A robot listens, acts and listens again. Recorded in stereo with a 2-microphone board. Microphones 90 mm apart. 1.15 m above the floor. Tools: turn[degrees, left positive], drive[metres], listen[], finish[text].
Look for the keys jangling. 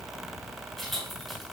Action: turn[30]
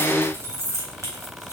Thought: So it is at 35° right.
Action: turn[-35]
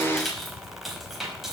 Action: finish[Found it: keys jangling, straight ahead, over 4 m away.]